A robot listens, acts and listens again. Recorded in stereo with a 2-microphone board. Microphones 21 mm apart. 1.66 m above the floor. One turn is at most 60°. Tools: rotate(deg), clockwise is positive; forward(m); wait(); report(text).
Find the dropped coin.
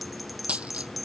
rotate(60)
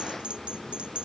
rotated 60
wait()
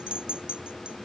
report("I heard a dropped coin, but can't make it out now. It was about 10° right or 50° right.")